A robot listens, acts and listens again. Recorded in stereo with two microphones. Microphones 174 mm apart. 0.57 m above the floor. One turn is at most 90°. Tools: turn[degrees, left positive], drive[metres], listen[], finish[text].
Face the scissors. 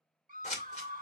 Thought: The scissors: about 45° left or 135° left.
Action: turn[45]
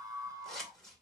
Action: finish[Found it: scissors, straight ahead.]